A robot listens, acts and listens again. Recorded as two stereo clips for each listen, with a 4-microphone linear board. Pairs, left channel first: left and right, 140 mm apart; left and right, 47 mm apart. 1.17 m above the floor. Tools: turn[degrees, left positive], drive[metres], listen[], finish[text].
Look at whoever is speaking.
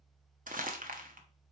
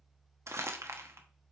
Action: listen[]
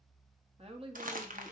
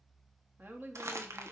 Thought: The woman speaking: about 45° right or 135° right.
Action: turn[-45]
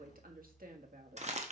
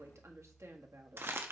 Thought: So it is at 90° right.
Action: turn[-90]
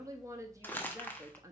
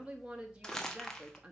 Thought: The woman speaking is now 25° right.
Action: turn[-25]
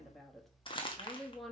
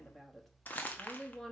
Action: finish[Facing the woman speaking.]